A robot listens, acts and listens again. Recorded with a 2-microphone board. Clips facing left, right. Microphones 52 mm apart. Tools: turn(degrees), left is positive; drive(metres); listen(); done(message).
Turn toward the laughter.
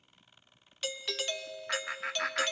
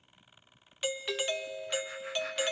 turn(degrees=90)
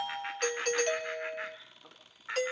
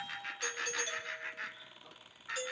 turn(degrees=25)
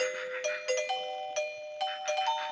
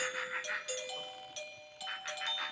listen()
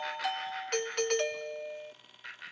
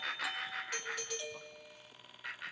done("Facing the laughter, over 4 m away.")